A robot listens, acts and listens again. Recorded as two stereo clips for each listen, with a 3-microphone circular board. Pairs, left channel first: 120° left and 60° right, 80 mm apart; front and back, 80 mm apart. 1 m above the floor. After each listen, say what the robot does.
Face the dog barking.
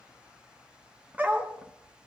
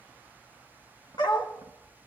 Turn 15° left.
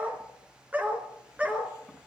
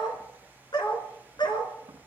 Turn 10° left.
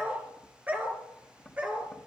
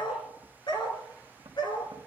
Turn 10° left.
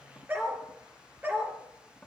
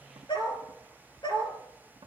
Facing the dog barking, over 4 m away.